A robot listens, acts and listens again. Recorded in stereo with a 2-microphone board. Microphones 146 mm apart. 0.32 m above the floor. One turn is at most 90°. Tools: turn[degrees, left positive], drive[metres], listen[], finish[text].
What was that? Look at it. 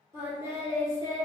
Thought: The singing: about 30° right or 150° right.
Action: turn[-30]
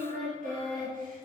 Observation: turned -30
Thought: So it is at 105° right.
Action: turn[-90]
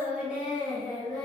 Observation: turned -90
Action: finish[Facing the singing, 1 to 2 m away.]